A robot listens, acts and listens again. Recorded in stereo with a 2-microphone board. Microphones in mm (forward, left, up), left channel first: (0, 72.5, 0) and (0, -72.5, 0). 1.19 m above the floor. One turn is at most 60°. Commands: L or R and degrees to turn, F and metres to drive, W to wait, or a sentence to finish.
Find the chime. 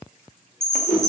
L25
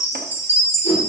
L60
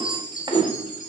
L60
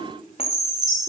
Found it: a chime, straight ahead.